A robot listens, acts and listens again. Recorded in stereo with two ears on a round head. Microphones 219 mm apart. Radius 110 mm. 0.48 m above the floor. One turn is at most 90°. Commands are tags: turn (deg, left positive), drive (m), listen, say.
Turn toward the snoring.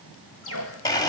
<turn deg="75"/>
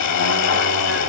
<listen/>
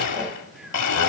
<listen/>
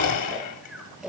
<say>Facing the snoring, 2 to 4 m away.</say>